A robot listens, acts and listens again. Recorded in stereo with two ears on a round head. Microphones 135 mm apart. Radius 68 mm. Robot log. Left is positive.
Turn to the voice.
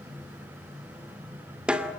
cmd idle
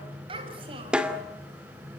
note: The child speaking: about 40° right or 140° right.
cmd yaw -40
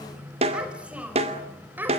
note: So it is at 15° right.
cmd yaw -15
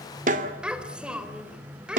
end: Facing the child speaking, 2 to 4 m away.